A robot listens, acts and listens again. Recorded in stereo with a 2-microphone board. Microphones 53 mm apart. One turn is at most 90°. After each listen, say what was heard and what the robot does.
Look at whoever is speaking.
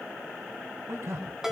The man speaking: about 70° right or 110° right. Turn 70° right.
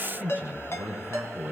So it is at 35° right. Turn 35° right.
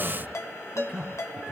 The man speaking is now 15° right. Turn 15° right.
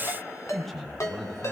Facing the man speaking, over 4 m away.